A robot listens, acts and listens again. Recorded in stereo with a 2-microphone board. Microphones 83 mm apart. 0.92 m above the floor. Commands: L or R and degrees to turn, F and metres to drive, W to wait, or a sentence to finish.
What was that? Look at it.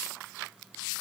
W
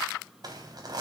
R55
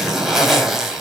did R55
Found it: a zipper, straight ahead.